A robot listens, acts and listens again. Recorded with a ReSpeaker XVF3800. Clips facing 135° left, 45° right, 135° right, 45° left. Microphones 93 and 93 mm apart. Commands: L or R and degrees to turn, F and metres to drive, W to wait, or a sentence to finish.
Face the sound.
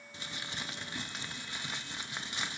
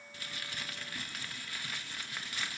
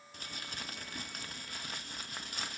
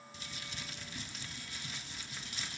R160
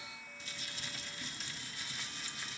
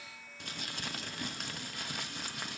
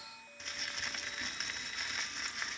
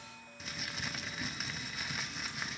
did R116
R45
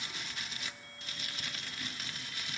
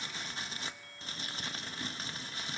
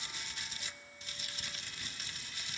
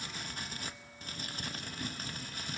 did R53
L10
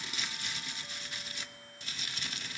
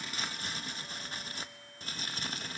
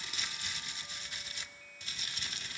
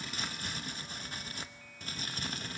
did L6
Facing the crumpling, under 1 m away.